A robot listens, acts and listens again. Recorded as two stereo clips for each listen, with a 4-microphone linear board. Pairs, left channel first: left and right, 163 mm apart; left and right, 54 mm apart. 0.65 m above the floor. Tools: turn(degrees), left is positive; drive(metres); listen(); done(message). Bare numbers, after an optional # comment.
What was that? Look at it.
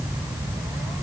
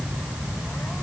listen()
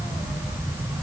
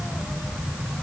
listen()
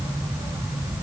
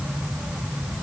done("I can't make out anything.")